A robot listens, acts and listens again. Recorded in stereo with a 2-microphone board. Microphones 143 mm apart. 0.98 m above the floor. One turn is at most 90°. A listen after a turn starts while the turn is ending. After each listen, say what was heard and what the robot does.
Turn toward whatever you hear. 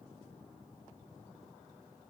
Keep listening.
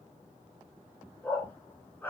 Turn 30° left.
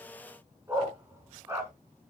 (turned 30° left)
So it is at 20° right. Turn 20° right.
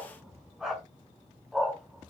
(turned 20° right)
Facing the dog barking, 2 to 4 m away.